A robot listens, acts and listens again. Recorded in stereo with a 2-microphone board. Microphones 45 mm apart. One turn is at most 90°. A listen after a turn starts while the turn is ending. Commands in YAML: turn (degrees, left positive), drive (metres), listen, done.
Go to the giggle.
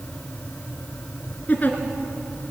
turn: 40
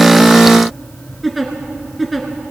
drive: 1.0
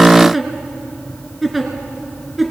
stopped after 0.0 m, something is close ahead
done: "Something is in my way. I am facing the giggle but have not reached it."